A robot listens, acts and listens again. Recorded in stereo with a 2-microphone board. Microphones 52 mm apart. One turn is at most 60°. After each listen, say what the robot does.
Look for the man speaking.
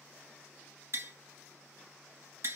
Keep listening.
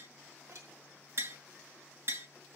Keep listening.
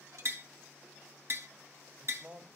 Turn 35° right.
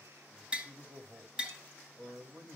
Turn 60° right.
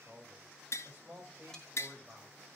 Turn 30° right.
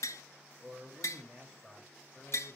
Turn 10° left.
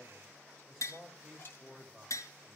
Facing the man speaking, 2 to 4 m away.